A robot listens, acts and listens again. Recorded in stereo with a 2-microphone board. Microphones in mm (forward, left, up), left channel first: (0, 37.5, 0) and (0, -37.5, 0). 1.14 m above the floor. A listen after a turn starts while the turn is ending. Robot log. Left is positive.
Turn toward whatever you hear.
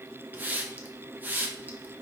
note: The hiss: about 25° right or 155° right.
cmd yaw -25
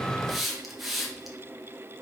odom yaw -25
end: Found it: a hiss, straight ahead.